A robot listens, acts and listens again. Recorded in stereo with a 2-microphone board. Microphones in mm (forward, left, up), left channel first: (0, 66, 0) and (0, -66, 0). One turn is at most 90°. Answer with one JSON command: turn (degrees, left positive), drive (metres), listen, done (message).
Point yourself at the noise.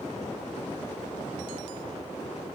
{"listen": true}
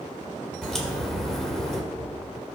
{"turn": 30}
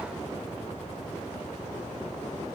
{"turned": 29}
{"listen": true}
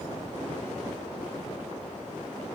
{"done": "I heard a crack, but can't make it out now. It was about 25° right or 145° left."}